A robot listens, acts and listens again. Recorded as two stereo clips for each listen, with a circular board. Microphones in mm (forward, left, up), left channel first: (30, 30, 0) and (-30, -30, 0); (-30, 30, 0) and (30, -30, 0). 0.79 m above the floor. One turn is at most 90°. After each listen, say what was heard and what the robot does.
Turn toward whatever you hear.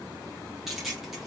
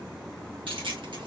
The keys jangling: 45° right. Turn 45° right.
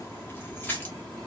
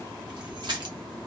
The keys jangling is now 20° right. Turn 20° right.
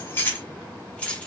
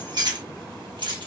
The keys jangling is now 30° right. Turn 30° right.
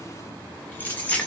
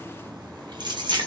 The keys jangling is now 30° right. Turn 30° right.
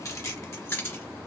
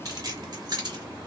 The keys jangling is now 10° right. Turn 10° right.
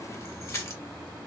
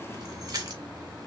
Found it: keys jangling, straight ahead.